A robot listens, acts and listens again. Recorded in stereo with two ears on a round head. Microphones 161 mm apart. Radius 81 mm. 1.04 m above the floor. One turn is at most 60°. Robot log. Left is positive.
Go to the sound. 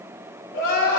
cmd yaw +60
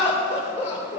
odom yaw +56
note: So it is at 40° left.
cmd yaw +40
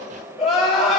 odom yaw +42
cmd fwd 1.0
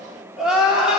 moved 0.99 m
cmd fwd 1.0
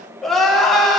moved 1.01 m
cmd fwd 1.0
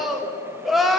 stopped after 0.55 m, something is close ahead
end: I am next to the crying.